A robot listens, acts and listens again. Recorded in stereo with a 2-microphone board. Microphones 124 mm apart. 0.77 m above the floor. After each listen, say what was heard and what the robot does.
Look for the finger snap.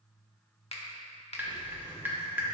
The finger snap: about 55° left or 125° left. Turn 55° left.
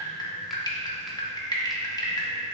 Keep listening.
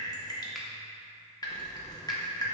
Keep listening.
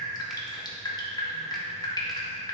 I heard a finger snap, but can't make it out now. It was about straight ahead or 70° left.